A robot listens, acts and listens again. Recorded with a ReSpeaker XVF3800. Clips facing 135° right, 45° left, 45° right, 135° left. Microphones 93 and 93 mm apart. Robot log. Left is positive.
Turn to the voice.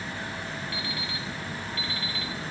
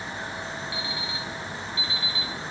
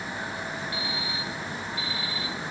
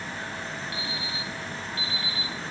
cmd idle
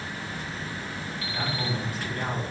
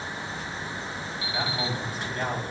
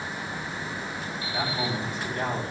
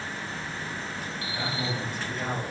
end: Found it: a man speaking, straight ahead, over 4 m away.